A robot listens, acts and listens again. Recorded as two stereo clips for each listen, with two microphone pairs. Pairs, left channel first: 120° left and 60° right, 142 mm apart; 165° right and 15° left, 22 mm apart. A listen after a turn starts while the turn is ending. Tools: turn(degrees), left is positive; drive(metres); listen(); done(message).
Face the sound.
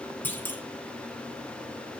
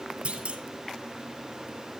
turn(degrees=45)
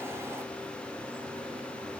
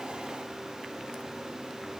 done("Facing where the clunk came from. I can't hear it now.")